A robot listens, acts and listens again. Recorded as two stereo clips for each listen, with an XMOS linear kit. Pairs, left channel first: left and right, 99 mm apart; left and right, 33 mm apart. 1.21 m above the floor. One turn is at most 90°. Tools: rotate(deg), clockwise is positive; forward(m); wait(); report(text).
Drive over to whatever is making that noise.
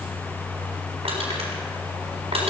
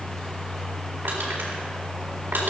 rotate(90)
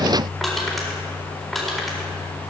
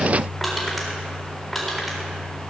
forward(1.0)
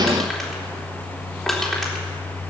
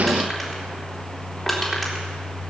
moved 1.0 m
forward(1.0)
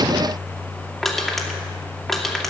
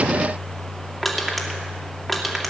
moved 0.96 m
forward(1.0)
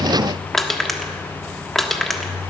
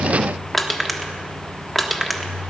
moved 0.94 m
forward(1.0)
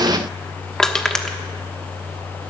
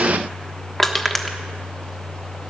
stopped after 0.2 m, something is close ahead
report("Arrived at the crushing, straight ahead.")